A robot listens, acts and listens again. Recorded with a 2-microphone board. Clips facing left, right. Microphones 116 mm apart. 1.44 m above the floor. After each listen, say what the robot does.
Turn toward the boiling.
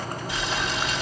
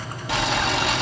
Turn 70° right.
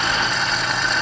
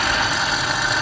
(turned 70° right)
Found it: boiling, straight ahead.